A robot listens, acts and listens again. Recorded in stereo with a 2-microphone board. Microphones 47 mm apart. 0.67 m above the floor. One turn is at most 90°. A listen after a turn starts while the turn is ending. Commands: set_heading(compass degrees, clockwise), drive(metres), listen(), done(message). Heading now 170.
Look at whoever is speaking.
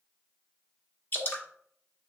listen()
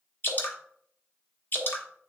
listen()
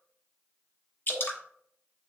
done("I can't make out anyone speaking to turn to.")